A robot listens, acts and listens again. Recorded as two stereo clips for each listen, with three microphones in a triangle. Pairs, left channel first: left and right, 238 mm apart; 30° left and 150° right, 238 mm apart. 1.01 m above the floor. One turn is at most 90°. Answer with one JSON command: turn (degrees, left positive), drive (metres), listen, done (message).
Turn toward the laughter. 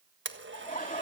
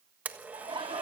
{"turn": 90}
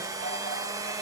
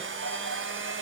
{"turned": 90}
{"turn": 55}
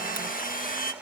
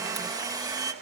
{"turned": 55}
{"listen": true}
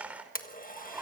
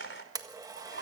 {"done": "Facing the laughter, over 4 m away."}